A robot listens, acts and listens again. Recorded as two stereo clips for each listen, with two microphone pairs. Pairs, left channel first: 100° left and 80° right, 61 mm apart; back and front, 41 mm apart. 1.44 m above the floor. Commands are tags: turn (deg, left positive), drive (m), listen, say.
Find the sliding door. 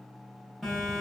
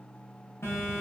<listen/>
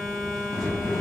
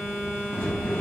<turn deg="130"/>
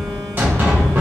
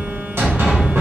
<turn deg="-20"/>
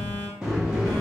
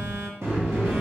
<say>Found it: a sliding door, straight ahead.</say>